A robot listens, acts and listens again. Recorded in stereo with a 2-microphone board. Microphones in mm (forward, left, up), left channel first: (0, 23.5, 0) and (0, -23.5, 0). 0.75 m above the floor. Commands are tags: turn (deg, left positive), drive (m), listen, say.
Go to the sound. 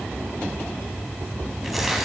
<turn deg="30"/>
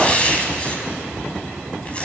<turn deg="155"/>
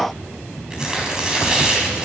<turn deg="-15"/>
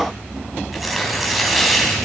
<drive m="1.0"/>
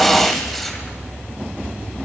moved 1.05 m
<drive m="1.0"/>
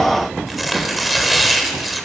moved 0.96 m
<drive m="1.0"/>
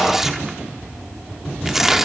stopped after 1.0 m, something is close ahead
<turn deg="-10"/>
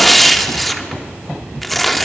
<say>Arrived at the tearing paper, straight ahead.</say>